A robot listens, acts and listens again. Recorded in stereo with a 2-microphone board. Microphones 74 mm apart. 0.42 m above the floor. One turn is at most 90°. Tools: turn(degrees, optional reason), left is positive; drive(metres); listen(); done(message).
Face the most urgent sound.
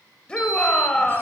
turn(degrees=30)
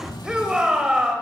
turn(degrees=-15, reason="So it is at 15° right.")
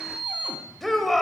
done("Found it: a shout, straight ahead, 1 to 2 m away.")